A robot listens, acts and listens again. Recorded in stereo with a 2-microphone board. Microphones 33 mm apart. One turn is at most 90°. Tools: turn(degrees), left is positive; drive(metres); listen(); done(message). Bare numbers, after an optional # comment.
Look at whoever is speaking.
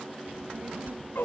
# The child speaking: about 55° right or 125° right.
turn(-55)
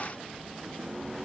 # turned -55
# So it is at 65° right.
turn(-65)
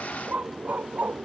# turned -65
listen()
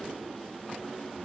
listen()
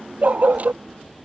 done("Found it: a child speaking, straight ahead.")